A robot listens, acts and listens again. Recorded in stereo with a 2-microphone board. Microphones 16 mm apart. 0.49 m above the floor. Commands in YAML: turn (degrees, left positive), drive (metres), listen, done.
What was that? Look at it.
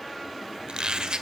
turn: -70
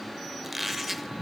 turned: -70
turn: -10
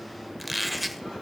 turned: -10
done: "Facing the squeak."